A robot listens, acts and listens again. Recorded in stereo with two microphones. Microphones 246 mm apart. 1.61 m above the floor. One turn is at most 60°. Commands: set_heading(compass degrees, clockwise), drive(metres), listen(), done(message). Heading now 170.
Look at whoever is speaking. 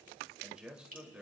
set_heading(200)
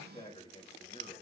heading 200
set_heading(175)
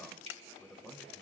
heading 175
done("Facing the man speaking, 2 to 4 m away.")